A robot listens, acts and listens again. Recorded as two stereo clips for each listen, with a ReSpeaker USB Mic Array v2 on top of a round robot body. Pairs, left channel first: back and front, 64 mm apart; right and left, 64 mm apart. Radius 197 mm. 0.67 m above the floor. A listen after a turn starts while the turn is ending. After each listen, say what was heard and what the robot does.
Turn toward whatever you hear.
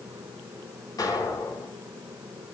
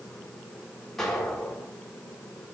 The explosion: straight behind. Turn 180° left.
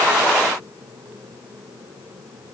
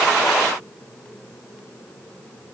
I heard an explosion from this way, but can't make it out now.